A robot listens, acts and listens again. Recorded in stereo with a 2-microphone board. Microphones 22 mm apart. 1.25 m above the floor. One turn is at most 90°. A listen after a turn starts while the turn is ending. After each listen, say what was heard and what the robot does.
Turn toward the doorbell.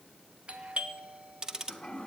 The doorbell: about 60° right or 120° right. Turn 60° right.
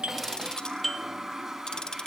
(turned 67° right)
Found it: a doorbell, straight ahead, 1 to 2 m away.